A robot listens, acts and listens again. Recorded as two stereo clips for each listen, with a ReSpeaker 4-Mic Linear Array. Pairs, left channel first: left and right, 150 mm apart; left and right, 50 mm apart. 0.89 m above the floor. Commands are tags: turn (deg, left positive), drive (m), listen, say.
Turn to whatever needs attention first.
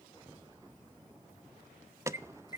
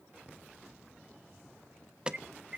<turn deg="-20"/>
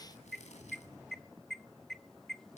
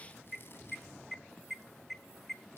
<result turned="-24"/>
<say>Found it: an alarm, straight ahead.</say>